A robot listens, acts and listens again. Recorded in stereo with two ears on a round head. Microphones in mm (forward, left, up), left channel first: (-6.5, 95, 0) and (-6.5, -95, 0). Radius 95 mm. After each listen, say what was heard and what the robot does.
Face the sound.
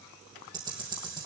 The ticking: about 20° right or 160° right. Turn 20° right.
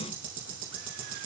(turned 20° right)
So it is at 140° right. Turn 140° right.
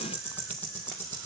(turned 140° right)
The ticking is now 10° left. Turn 10° left.
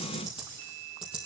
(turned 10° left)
Found it: ticking, straight ahead, over 4 m away.